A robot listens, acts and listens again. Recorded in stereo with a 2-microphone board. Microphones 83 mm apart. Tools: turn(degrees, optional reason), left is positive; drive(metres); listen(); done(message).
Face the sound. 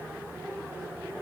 listen()
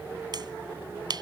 turn(degrees=-60, reason="The finger snap: about 60° right or 120° right.")
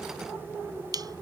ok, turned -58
turn(degrees=-55, reason="So it is at 55° right.")
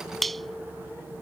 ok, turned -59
done("Facing the finger snap.")